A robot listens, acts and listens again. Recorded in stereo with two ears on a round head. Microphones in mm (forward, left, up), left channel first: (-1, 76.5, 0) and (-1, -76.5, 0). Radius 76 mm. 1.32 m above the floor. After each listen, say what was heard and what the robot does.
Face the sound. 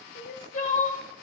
The crying: about 45° left or 135° left. Turn 45° left.
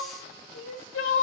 So it is at 90° left. Turn 90° left.
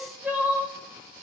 Facing the crying, 1 to 2 m away.